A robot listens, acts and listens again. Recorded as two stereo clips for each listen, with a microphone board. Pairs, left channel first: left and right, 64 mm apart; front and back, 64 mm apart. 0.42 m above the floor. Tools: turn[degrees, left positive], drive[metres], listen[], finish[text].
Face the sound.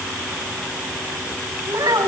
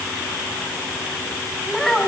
Thought: The child speaking: 85° right.
Action: turn[-85]
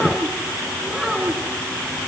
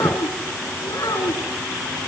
Action: finish[Found it: a child speaking, straight ahead, 2 to 4 m away.]